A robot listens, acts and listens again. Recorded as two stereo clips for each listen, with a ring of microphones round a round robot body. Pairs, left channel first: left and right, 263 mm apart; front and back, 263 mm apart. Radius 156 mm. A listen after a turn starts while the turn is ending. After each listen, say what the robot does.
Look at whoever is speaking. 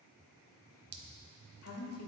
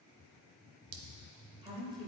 Turn 110° left.
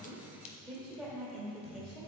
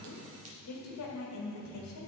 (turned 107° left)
Facing the woman speaking.